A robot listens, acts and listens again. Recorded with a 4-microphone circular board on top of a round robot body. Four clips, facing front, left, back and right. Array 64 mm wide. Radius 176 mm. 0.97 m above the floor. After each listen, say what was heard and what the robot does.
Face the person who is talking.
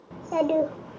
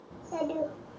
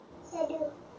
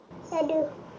The child speaking: 25° right. Turn 25° right.
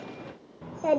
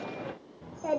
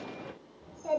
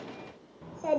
Found it: a child speaking, straight ahead.